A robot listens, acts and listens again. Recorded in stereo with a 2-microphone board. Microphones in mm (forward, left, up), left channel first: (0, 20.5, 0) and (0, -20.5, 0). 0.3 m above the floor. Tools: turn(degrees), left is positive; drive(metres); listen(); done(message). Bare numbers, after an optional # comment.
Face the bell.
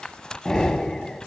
listen()
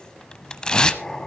listen()
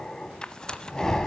done("I can't make out a bell to turn to.")